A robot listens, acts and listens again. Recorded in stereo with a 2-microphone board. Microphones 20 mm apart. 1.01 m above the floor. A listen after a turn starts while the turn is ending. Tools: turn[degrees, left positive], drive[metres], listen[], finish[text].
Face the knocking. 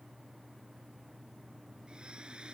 Action: listen[]
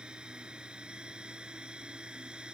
Action: listen[]
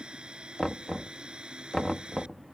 Thought: The knocking: about 35° left or 145° left.
Action: turn[35]
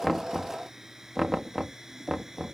Action: finish[Found it: knocking, straight ahead.]